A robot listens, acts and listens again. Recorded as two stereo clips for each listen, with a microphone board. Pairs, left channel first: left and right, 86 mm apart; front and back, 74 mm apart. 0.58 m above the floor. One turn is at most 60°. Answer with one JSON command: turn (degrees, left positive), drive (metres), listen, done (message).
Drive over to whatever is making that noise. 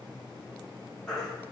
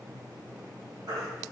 {"turn": 60}
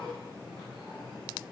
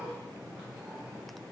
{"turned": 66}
{"turn": 60}
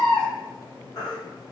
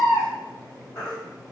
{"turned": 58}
{"turn": 45}
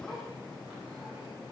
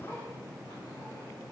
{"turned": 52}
{"listen": true}
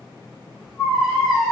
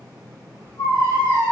{"drive": 1.0}
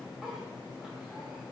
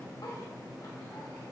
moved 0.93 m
{"listen": true}
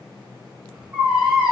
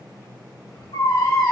{"turn": -10}
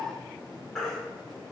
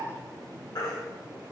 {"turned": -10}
{"drive": 1.0}
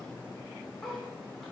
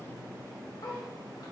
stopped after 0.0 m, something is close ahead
{"done": "I am next to the baby crying."}